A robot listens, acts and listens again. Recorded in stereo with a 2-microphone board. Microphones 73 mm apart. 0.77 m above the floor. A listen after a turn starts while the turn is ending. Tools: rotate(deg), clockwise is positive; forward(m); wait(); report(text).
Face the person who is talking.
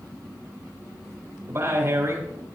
rotate(40)
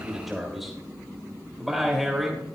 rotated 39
report("Facing the man speaking, 2 to 4 m away.")